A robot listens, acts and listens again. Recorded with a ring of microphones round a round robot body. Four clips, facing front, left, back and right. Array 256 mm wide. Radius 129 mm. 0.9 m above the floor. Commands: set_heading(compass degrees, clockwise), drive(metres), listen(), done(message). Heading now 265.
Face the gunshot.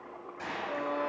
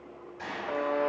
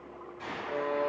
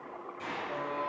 set_heading(225)
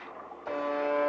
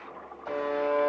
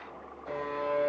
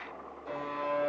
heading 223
done("I heard a gunshot from this way, but can't make it out now.")